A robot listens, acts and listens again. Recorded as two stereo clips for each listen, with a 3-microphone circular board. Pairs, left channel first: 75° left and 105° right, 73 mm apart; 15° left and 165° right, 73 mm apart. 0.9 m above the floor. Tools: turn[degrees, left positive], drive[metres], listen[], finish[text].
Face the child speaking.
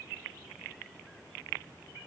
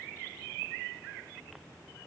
Action: listen[]
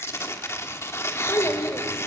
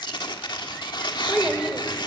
Thought: The child speaking: 120° left.
Action: turn[120]
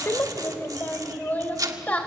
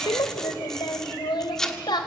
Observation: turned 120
Action: finish[Found it: a child speaking, straight ahead.]